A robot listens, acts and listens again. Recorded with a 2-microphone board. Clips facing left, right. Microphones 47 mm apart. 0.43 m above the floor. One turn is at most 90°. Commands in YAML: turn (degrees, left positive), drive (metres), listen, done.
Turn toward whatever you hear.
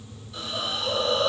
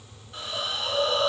turn: -35
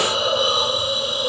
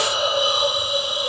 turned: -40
turn: -90
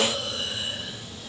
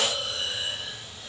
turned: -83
turn: -20
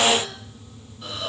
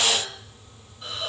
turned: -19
done: "Found it: a hiss, straight ahead."